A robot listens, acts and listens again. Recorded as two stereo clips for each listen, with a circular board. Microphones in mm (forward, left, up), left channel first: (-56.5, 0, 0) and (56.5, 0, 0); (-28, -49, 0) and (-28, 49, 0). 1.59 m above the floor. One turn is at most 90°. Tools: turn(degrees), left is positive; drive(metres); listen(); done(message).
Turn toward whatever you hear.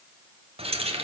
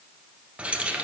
turn(degrees=15)
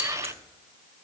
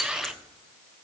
listen()
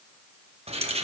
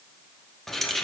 done("Found it: keys jangling, straight ahead, under 1 m away.")